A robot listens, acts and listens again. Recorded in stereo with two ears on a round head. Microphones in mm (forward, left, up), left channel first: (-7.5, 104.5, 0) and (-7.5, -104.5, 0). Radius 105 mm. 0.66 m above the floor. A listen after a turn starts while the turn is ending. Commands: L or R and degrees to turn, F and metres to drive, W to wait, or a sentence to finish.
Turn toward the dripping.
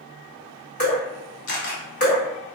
L35
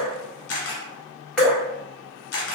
Facing the dripping, 1 to 2 m away.